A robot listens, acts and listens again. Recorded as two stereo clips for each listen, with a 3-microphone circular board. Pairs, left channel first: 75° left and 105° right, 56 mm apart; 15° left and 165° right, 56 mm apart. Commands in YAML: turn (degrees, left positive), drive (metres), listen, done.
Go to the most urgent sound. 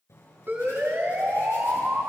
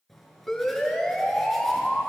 turn: -70
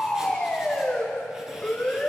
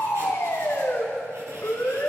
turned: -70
drive: 1.0
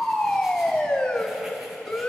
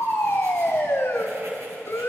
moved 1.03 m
drive: 1.0
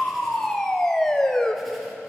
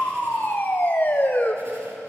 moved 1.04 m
drive: 1.0
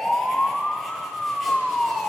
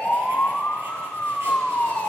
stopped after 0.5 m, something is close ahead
turn: -10
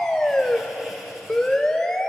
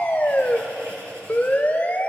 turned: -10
done: "Arrived at the siren, straight ahead."